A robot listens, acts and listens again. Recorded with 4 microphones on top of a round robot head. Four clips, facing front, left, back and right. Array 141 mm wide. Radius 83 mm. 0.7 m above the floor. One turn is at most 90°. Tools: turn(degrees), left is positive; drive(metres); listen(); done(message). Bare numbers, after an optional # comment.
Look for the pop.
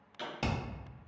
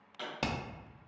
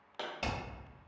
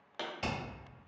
# The pop: 140° right.
turn(-90)
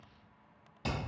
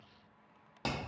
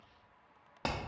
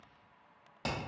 # Nothing new. It was at 50° right.
turn(-50)
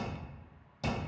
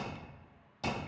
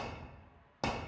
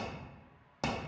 done("Facing where the pop came from. I can't hear it now.")